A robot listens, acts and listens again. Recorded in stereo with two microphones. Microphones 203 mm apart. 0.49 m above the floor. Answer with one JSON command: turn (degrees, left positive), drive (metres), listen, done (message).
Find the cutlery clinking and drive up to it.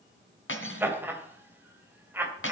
{"turn": 90}
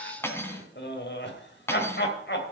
{"turn": 10}
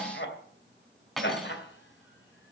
{"drive": 1.0}
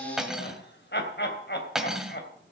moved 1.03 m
{"drive": 1.0}
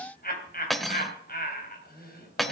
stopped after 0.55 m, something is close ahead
{"done": "I am next to the cutlery clinking."}